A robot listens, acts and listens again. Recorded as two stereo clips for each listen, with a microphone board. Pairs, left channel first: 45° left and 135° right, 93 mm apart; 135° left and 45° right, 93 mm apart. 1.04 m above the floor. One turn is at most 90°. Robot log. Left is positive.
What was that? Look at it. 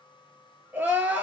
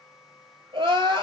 note: The crying: 70° right.
cmd yaw -70
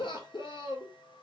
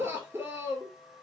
note: The crying is now 15° left.
cmd yaw +15
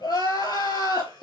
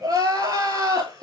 end: Found it: crying, straight ahead.